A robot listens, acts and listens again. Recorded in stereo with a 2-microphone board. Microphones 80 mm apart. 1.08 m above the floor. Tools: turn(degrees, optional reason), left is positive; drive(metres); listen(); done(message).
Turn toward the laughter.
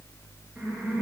turn(degrees=-30)
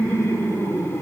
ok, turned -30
turn(degrees=30, reason="So it is at 30° left.")
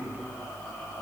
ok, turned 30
listen()
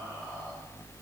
listen()
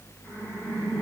turn(degrees=25, reason="The laughter is now 25° left.")
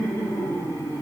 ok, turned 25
done("Found it: laughter, straight ahead, 2 to 4 m away.")